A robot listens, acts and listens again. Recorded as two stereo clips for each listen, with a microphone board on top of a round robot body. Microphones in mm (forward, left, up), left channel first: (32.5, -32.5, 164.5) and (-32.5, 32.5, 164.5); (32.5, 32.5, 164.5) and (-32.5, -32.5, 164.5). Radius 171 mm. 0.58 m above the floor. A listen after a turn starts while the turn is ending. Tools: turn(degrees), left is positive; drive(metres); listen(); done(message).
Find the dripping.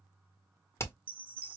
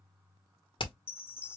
listen()
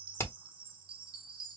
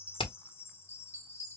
listen()
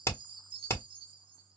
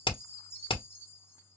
done("I can't make out dripping to turn to.")